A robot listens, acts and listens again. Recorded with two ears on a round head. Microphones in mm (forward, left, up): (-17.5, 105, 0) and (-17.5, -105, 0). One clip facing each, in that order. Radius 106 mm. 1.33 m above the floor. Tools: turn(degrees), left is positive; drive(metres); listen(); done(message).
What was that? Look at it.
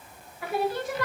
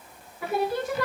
turn(degrees=-65)
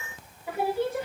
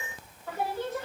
turn(degrees=10)
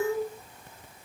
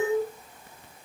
done("Found it: singing, straight ahead, 2 to 4 m away.")